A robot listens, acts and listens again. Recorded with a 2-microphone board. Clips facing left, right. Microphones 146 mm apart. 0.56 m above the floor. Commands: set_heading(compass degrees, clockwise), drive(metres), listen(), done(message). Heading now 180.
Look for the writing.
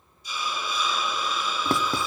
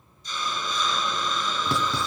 set_heading(125)
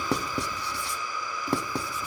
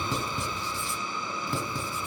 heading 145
set_heading(55)
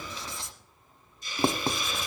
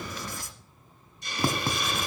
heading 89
set_heading(59)
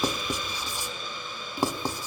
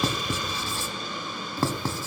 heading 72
set_heading(57)
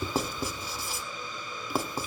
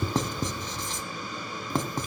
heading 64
done("Facing the writing.")